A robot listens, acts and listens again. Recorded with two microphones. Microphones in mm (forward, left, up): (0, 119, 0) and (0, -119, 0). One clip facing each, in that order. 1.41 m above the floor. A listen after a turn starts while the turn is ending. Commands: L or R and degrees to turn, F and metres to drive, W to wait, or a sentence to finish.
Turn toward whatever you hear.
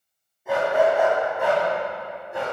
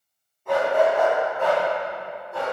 L20
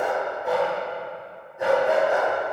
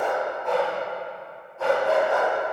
L20
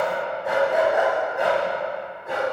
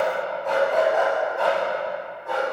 L25
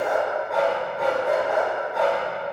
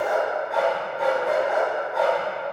Facing the dog barking, 2 to 4 m away.